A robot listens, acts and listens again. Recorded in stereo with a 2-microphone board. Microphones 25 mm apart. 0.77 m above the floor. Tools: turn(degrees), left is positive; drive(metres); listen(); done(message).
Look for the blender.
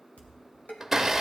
turn(degrees=-15)
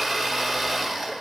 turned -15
done("Found it: a blender, straight ahead.")